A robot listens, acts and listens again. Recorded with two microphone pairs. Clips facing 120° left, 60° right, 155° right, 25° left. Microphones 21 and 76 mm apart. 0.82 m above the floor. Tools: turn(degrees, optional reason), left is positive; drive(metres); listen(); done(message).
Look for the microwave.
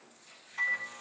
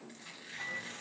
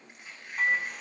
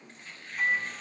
turn(degrees=155, reason="The microwave: 155° left.")
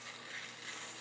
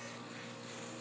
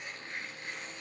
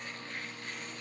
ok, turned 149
done("Facing the microwave.")